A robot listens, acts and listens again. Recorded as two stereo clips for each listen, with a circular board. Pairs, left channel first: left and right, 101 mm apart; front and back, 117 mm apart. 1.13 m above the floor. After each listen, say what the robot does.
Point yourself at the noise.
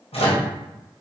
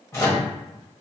Turn 70° left.
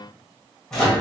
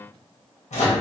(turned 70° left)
Found it: a microwave, straight ahead, 1 to 2 m away.